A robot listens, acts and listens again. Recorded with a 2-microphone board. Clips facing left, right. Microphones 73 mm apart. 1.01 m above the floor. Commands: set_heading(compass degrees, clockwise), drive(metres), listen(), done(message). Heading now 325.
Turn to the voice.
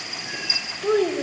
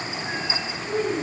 set_heading(260)
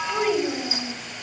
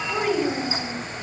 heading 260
done("Found it: a child speaking, straight ahead.")